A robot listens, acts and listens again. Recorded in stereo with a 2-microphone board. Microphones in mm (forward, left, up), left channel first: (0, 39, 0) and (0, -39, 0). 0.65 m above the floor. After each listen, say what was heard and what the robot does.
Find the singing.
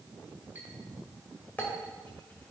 Keep listening.
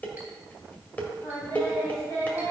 The singing: about 25° left or 155° left. Turn 25° left.
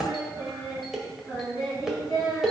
So it is at 135° left. Turn 135° left.
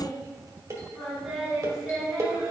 Found it: singing, straight ahead, over 4 m away.